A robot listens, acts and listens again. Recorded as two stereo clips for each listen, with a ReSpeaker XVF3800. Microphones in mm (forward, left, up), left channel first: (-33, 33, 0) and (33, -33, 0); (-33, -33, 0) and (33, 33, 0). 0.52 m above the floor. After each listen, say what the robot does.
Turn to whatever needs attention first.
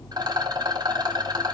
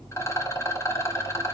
Keep listening.
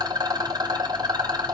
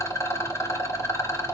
Keep listening.
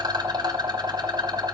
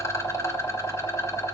I can't make out anything urgent, only a rattle.